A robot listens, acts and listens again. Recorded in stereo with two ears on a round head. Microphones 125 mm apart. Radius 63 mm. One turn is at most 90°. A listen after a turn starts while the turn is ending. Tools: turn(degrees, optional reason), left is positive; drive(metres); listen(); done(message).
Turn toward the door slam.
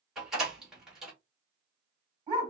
turn(degrees=-30)
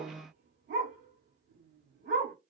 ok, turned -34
listen()
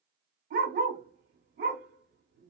done("I heard a door slam, but can't make it out now. It was about 30° left or 140° right.")